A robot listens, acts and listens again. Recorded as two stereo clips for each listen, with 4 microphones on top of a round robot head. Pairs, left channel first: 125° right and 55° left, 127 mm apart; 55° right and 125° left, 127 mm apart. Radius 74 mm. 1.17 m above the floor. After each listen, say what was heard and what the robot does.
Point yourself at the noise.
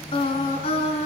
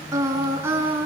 The singing: 165° right. Turn 165° right.
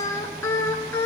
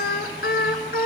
The singing is now 50° right. Turn 50° right.
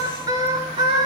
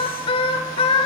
Found it: singing, straight ahead, over 4 m away.